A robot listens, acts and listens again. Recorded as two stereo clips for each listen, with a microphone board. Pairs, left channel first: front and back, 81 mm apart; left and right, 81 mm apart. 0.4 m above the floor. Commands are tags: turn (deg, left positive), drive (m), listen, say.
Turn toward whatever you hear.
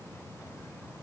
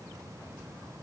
<listen/>
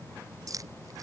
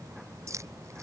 <turn deg="-140"/>
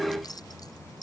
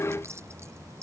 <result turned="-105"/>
<turn deg="-35"/>
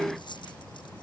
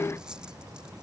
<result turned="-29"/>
<turn deg="-10"/>
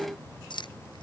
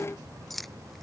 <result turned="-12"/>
<say>Facing the keys jangling.</say>